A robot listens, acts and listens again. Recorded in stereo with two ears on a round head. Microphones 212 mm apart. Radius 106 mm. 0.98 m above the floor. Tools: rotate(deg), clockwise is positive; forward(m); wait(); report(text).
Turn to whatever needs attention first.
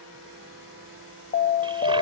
rotate(-30)
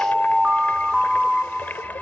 report("Found it: an alarm, straight ahead.")